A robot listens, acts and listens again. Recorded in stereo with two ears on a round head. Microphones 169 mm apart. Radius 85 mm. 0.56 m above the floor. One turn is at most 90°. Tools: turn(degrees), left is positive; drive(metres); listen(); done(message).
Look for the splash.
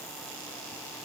listen()
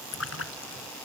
turn(degrees=90)
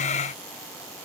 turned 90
done("I heard a splash from this way, but can't make it out now.")